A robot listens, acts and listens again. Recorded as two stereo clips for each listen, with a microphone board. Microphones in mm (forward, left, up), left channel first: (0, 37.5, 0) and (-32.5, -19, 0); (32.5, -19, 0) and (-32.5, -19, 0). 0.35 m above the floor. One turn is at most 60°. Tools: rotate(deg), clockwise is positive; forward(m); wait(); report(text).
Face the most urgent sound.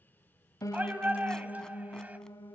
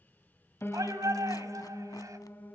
rotate(-60)
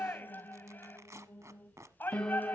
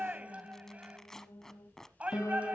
rotate(-60)
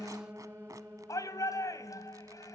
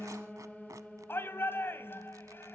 rotate(-50)
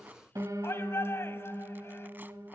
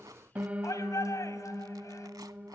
rotate(-15)
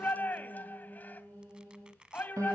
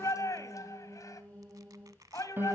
report("Found it: a shout, straight ahead, 2 to 4 m away.")